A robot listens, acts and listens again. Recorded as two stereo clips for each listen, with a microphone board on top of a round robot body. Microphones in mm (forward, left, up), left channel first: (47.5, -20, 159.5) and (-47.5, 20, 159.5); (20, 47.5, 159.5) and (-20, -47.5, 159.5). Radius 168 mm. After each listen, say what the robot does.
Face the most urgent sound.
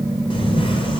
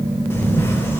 Keep listening.
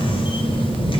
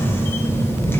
Keep listening.
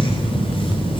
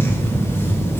I can't make out anything urgent to turn to.